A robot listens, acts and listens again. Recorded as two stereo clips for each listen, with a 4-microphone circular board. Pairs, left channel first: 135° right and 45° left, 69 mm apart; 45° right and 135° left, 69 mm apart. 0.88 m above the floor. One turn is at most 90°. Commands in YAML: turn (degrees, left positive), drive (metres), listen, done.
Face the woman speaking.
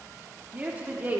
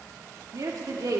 turn: 90
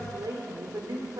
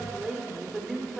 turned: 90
turn: 45
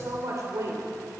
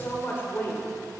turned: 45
turn: 10
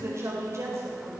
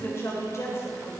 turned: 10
done: "Facing the woman speaking, 2 to 4 m away."